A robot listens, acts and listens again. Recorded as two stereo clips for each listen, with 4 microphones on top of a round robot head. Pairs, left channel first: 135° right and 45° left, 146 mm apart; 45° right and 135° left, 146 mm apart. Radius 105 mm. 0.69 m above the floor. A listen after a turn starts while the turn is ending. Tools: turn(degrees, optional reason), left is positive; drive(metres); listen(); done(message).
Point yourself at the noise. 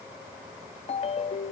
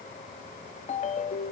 turn(degrees=-85, reason="The ringtone: 85° right.")
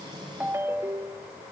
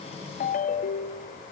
turn(degrees=-25, reason="The ringtone is now 25° right.")
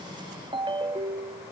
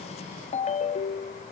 turn(degrees=-10, reason="The ringtone is now 10° right.")
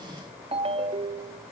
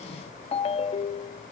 done("Facing the ringtone.")